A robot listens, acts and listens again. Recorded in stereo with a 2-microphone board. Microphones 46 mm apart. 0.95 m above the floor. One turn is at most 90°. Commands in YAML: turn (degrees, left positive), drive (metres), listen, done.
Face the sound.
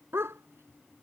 turn: -65
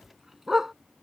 done: "Found it: a dog barking, straight ahead."